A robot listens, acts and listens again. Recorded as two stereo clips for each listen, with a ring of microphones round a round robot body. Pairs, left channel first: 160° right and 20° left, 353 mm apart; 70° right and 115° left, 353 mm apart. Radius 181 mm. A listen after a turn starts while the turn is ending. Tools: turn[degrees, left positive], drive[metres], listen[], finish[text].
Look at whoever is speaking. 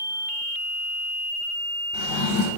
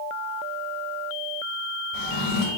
Action: listen[]
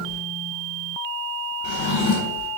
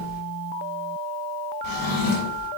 Action: listen[]
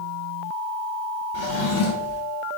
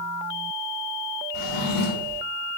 Action: finish[I can't make out anyone speaking, only a drawer.]